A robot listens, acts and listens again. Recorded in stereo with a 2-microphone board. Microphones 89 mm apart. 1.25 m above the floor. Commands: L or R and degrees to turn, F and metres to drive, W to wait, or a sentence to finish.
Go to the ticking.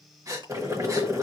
W
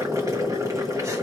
W
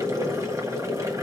I can't make out ticking to turn to.